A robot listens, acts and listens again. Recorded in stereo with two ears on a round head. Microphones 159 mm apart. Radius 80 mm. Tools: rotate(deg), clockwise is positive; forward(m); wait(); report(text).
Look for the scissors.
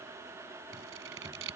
rotate(90)
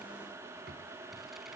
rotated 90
wait()
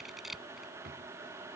report("Found it: scissors, straight ahead.")